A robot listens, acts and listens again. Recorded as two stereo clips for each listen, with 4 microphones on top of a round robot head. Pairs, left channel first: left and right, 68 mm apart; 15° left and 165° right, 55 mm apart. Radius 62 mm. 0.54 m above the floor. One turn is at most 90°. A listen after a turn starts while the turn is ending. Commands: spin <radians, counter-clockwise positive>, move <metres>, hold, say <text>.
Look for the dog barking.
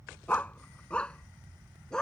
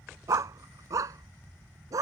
spin 1.57
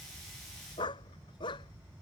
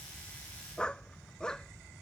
spin 1.57
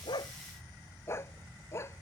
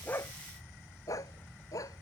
spin 0.61
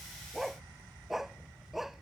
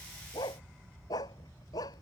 say Facing the dog barking.